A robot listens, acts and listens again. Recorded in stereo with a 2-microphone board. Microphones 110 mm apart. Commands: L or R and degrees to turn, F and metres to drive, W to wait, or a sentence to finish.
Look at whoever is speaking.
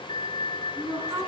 R35
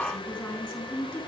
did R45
L10
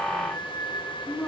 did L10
Facing the woman speaking.